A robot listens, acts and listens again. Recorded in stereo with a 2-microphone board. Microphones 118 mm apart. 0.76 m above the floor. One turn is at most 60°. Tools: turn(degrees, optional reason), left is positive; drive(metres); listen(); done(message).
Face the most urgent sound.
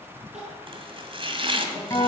turn(degrees=-60, reason="The crying: about 70° right or 110° right.")
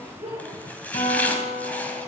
turn(degrees=-50, reason="So it is at 50° right.")
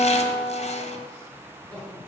done("Found it: crying, straight ahead, over 4 m away.")